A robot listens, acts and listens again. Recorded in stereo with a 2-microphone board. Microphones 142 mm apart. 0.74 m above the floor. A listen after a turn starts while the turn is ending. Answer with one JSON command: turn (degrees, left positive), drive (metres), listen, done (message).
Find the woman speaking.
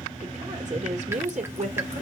{"turn": -60}
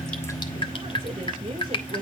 {"listen": true}
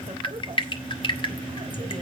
{"listen": true}
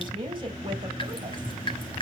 {"turn": -35}
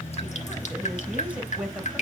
{"turn": -10}
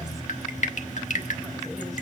{"listen": true}
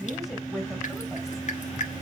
{"done": "Facing the woman speaking, over 4 m away."}